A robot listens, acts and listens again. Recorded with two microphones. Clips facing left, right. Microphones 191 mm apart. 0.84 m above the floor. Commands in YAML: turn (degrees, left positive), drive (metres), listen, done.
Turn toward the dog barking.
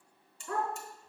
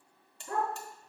turn: -30
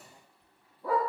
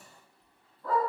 turn: 10
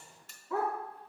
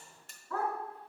turn: 10
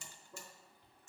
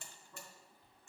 listen: true
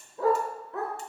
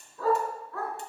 turn: 20
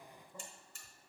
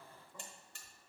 listen: true
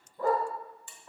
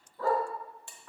turn: 15
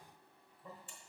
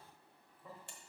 listen: true
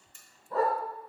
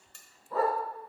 done: "Found it: a dog barking, straight ahead."